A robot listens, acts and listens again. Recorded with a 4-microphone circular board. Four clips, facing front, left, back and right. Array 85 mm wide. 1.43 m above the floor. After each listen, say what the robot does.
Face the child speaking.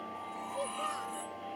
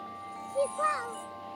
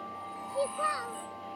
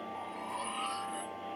Turn 115° left.
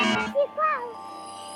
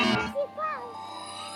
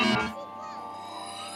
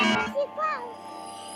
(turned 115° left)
Turn 10° right.
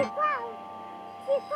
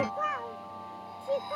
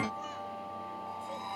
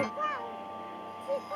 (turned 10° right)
Found it: a child speaking, straight ahead.